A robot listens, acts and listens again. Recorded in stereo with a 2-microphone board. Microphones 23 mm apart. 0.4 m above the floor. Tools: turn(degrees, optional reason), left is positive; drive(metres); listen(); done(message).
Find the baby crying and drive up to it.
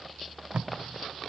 listen()
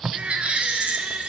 turn(degrees=-65, reason="The baby crying: about 65° right or 115° right.")
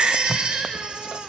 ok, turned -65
turn(degrees=-50, reason="So it is at 50° right.")
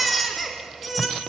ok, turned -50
drive(metres=1.0)
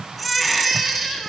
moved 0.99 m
drive(metres=1.0)
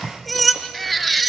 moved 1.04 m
drive(metres=1.0)
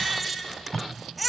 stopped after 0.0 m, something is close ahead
done("Arrived at the baby crying, straight ahead.")